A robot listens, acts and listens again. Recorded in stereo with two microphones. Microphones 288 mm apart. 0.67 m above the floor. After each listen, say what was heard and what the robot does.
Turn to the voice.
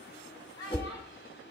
Turn 30° left.
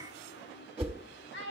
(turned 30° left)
So it is at 140° left. Turn 140° left.
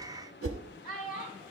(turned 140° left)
The child speaking is now 35° left. Turn 35° left.
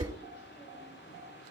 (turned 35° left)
Keep listening.
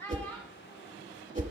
The child speaking is now 10° left. Turn 10° left.
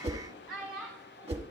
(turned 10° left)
Found it: a child speaking, straight ahead.